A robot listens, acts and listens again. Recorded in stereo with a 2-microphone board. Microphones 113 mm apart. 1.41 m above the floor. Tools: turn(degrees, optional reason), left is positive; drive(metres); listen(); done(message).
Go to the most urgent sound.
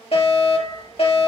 turn(degrees=55, reason="The fire alarm: about 55° left or 125° left.")
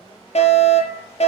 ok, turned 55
turn(degrees=70, reason="So it is at 70° left.")
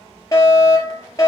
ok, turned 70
turn(degrees=30, reason="The fire alarm is now 30° left.")
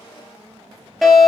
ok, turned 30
drive(metres=1.0)
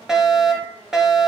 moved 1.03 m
drive(metres=1.0)
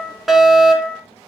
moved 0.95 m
drive(metres=1.0)
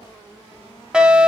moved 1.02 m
turn(degrees=-10, reason="The fire alarm is now 10° right.")
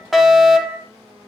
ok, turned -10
drive(metres=1.0)
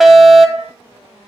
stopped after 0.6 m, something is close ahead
done("I am next to the fire alarm.")